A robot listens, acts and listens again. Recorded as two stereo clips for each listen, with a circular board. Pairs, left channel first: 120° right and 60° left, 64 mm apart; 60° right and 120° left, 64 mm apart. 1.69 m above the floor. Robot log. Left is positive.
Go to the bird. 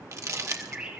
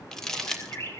note: The bird: 10° right.
cmd yaw -10
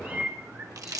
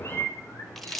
cmd fwd 1.0
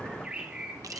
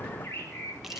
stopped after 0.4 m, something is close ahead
note: The bird is now 10° right.
cmd yaw -10
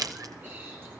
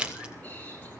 cmd idle
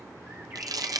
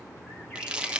cmd idle
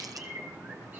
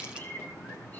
end: Something is in my way. I am facing the bird but have not reached it.